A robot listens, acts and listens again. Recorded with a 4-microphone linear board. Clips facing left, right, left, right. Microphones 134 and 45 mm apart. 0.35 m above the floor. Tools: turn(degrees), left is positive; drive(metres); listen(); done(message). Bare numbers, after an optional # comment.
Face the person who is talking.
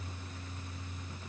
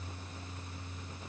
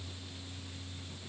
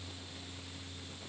listen()
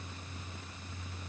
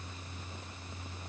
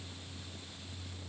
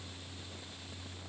listen()
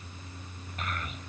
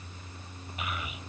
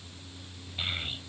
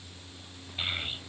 turn(-30)
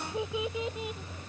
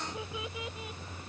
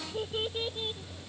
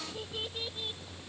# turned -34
# So it is at 25° left.
turn(25)
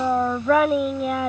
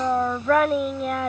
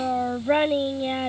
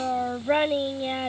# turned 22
done("Facing the child speaking.")